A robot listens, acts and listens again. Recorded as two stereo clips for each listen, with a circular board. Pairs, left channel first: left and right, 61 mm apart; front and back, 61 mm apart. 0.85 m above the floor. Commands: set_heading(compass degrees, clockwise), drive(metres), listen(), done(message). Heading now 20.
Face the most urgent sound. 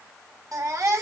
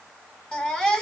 set_heading(100)
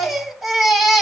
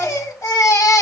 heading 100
done("Found it: a baby crying, straight ahead.")